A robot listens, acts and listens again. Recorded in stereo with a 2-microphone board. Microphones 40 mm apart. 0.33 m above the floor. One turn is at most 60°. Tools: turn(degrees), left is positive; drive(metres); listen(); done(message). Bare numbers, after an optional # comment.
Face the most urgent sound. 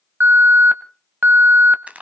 # The alarm: about 50° right or 130° right.
turn(-50)
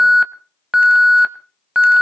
# So it is at 15° right.
turn(-15)
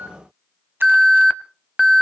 done("Found it: an alarm, straight ahead.")